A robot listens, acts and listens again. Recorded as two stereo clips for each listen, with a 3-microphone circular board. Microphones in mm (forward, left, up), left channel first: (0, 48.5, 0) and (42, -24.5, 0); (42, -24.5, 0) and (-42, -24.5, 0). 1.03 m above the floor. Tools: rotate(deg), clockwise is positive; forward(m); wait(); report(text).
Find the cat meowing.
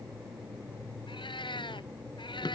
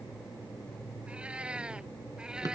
rotate(-100)
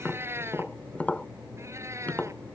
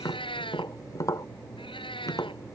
report("Found it: a cat meowing, straight ahead.")